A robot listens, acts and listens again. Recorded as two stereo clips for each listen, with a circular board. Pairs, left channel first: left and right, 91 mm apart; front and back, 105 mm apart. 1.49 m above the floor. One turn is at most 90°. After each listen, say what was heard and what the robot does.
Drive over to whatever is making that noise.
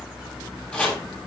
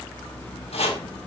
The chopping: 10° left. Turn 10° left.
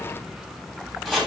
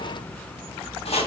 Drive 1.0 m forward.
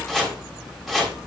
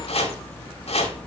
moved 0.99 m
Drive 1.0 m forward.
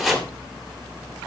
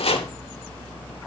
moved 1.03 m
Drive 1.0 m forward.
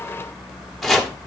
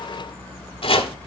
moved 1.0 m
Drive 1.0 m forward.
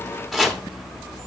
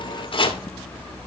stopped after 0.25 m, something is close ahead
I am next to the chopping.